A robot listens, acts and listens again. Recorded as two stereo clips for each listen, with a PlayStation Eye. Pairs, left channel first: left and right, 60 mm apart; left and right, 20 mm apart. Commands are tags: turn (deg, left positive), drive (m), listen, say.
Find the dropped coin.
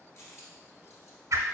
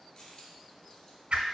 <turn deg="50"/>
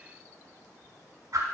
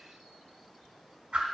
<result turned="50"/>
<listen/>
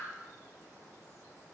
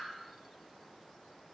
<say>I heard a dropped coin, but can't make it out now. It was about straight ahead or 80° left.</say>